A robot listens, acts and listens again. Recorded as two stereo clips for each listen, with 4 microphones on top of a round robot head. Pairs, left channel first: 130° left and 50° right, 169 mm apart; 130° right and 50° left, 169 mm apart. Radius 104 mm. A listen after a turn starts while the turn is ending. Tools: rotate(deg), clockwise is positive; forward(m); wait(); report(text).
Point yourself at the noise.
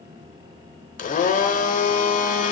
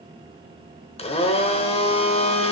rotate(-175)
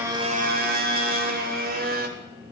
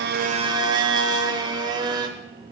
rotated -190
rotate(15)
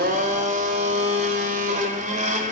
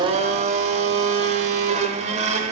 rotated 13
report("Facing the blender.")